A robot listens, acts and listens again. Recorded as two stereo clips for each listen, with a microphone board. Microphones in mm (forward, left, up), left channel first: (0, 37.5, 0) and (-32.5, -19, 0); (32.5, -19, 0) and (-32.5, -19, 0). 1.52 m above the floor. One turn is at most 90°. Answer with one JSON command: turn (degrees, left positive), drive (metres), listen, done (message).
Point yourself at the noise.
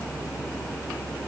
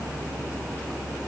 {"listen": true}
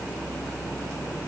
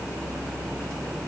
{"listen": true}
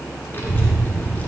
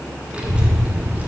{"turn": 90}
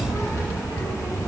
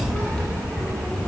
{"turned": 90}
{"turn": 85}
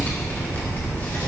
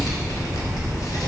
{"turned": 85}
{"done": "Found it: a child speaking, straight ahead, 1 to 2 m away."}